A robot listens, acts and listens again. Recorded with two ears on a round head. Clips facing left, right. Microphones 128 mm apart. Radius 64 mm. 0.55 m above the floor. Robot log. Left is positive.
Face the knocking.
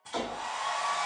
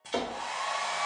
note: The knocking: about 60° right or 120° right.
cmd yaw -60
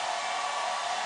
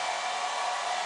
cmd idle
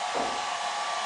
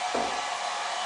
cmd idle
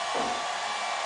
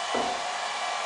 end: I heard knocking, but can't make it out now. It was about straight ahead or 60° right.